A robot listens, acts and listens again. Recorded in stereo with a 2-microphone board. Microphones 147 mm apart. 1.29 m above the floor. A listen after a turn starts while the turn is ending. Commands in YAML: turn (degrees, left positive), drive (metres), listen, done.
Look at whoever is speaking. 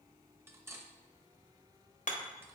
listen: true
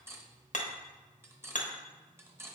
listen: true
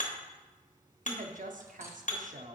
turn: -65
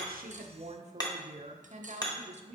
turn: -50
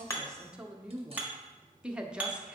done: "Found it: a woman speaking, straight ahead, under 1 m away."